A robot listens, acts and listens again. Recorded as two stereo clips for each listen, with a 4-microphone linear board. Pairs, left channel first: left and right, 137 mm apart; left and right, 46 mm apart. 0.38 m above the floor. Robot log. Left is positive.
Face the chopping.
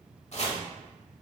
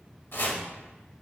note: The chopping: about 55° left or 125° left.
cmd yaw +55
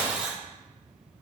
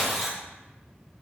note: So it is at 15° left.
cmd yaw +15
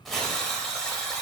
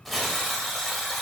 end: Found it: chopping, straight ahead.